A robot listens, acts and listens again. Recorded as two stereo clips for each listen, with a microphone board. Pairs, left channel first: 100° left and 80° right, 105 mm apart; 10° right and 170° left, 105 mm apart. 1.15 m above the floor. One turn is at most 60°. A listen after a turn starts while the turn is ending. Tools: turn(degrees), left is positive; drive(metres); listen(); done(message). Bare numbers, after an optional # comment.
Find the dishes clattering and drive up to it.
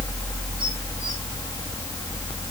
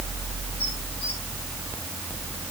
listen()
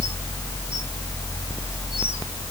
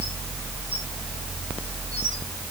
listen()
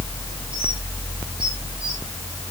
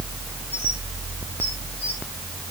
done("I can't make out dishes clattering.")